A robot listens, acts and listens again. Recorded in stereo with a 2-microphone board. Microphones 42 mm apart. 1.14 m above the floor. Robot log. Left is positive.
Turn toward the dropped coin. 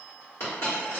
note: The dropped coin: about 70° left or 110° left.
cmd yaw +70
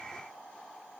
cmd idle
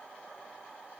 end: I heard a dropped coin, but can't make it out now. It was about straight ahead or 40° left.